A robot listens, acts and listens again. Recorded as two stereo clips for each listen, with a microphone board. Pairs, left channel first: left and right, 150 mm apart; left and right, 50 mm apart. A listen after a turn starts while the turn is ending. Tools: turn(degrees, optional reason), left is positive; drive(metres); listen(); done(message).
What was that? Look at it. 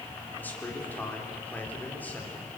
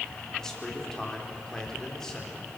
turn(degrees=30)
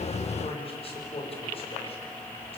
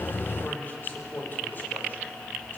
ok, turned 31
turn(degrees=140, reason="So it is at 140° left.")
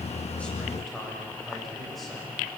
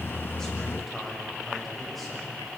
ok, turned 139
done("Facing the man speaking.")